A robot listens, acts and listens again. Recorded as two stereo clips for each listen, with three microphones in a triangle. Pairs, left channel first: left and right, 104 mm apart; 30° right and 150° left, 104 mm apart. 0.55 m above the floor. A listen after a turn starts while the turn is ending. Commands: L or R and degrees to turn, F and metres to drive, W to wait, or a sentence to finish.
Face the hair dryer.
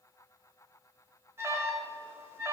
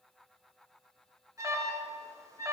W
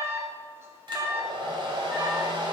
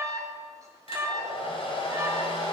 R50
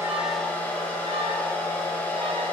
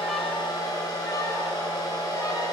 L15
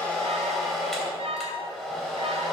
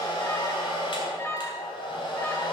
Found it: a hair dryer, straight ahead.